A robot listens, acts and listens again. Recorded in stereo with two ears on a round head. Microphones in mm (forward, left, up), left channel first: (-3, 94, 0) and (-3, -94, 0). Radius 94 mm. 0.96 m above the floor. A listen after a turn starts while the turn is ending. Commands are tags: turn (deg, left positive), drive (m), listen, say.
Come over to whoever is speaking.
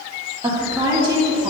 <turn deg="-20"/>
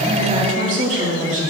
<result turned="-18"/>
<turn deg="-140"/>
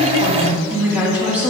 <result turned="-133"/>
<turn deg="-10"/>
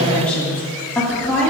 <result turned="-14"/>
<drive m="1.0"/>
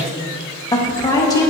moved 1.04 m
<turn deg="20"/>
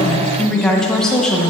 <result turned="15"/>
<drive m="1.0"/>
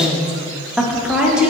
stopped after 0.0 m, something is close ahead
<say>Arrived at the woman speaking, straight ahead.</say>